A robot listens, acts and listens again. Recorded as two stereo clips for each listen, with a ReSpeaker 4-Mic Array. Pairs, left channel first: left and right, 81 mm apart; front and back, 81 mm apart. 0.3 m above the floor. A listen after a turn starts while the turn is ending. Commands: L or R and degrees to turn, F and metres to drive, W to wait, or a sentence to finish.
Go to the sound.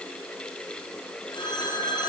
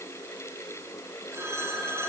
L120
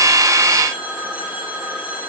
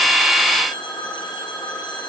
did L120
R20
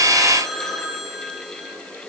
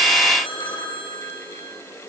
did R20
F1.0
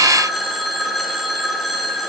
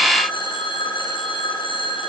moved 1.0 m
F1.0
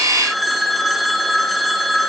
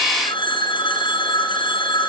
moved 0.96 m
F1.0
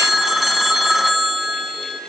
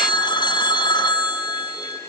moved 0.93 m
F1.0
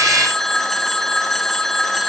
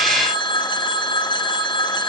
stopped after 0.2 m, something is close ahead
Arrived at the phone ringing, straight ahead.